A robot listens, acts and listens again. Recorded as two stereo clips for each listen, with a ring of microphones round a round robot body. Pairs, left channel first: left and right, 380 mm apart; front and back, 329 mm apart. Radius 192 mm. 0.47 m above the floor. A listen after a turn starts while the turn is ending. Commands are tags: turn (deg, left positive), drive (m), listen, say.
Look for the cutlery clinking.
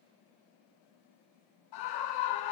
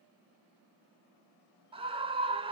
<listen/>
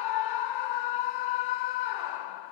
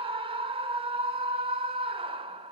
<listen/>
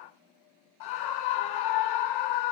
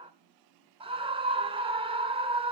<say>I can't make out cutlery clinking to turn to.</say>